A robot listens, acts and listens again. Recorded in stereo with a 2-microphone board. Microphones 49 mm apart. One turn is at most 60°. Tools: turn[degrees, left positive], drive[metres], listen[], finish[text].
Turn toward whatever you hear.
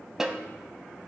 Action: turn[-30]
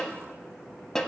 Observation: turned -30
Thought: So it is at 15° left.
Action: turn[15]
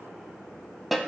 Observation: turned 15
Action: finish[Facing the snare drum, under 1 m away.]